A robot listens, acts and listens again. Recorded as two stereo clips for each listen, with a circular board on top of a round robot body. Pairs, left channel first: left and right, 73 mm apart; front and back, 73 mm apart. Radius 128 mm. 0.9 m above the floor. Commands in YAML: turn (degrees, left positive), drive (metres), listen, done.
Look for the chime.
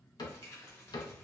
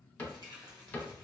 listen: true
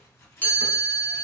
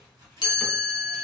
turn: 20
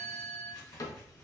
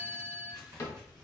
done: "Found it: a chime, straight ahead."